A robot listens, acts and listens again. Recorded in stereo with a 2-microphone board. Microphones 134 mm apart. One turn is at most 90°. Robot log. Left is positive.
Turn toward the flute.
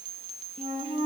note: The flute: about 55° right or 125° right.
cmd yaw -55
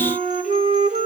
note: So it is at 65° right.
cmd yaw -65
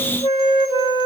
note: The flute is now 35° left.
cmd yaw +35
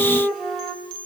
end: Found it: a flute, straight ahead, 2 to 4 m away.